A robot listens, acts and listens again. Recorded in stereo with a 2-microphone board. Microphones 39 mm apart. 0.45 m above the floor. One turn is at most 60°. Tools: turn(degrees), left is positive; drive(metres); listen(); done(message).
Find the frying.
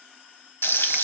turn(degrees=60)
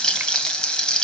turn(degrees=20)
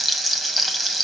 done("Found it: frying, straight ahead, 1 to 2 m away.")